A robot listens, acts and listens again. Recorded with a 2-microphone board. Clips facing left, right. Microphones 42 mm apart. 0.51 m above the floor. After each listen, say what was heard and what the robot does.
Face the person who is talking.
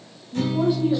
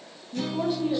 Turn 30° left.
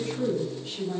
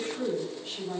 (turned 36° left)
Facing the woman speaking.